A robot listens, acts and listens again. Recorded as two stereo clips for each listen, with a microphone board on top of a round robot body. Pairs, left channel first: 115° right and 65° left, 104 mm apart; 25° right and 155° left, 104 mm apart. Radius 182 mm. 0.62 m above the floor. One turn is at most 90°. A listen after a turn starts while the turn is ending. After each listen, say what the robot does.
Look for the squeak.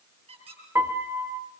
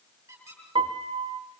Turn 90° left.
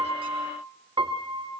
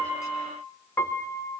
Keep listening.
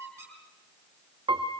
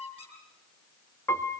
Facing the squeak, over 4 m away.